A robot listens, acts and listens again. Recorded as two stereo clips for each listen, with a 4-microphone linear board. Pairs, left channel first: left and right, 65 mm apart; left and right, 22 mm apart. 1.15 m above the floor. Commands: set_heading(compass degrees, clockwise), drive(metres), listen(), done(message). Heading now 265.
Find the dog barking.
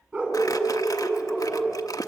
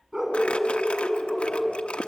set_heading(285)
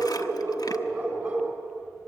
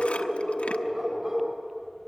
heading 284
set_heading(319)
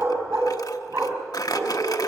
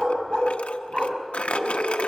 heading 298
set_heading(338)
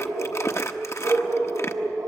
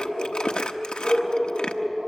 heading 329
set_heading(79)
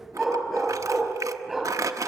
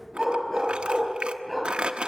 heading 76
done("Facing the dog barking, 2 to 4 m away.")